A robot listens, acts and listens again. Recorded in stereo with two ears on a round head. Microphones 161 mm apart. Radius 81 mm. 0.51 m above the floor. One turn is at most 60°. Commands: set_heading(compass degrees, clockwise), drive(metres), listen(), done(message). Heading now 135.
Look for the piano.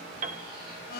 set_heading(175)
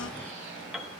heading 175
done("Found it: a piano, straight ahead.")